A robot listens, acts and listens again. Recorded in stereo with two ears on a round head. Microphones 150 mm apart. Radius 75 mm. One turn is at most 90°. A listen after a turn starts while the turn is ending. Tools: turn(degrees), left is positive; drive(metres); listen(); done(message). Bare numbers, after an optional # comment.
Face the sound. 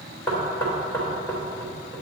# The knocking: about 15° left or 165° left.
turn(15)
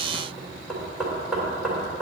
done("Facing the knocking, 2 to 4 m away.")